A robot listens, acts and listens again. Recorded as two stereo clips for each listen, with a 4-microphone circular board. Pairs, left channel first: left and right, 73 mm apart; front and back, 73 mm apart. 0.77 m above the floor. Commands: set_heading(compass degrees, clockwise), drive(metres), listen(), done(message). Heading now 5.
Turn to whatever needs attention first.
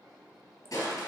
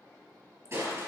listen()
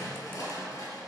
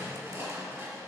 listen()
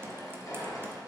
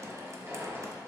done("I can't make out anything urgent to turn to.")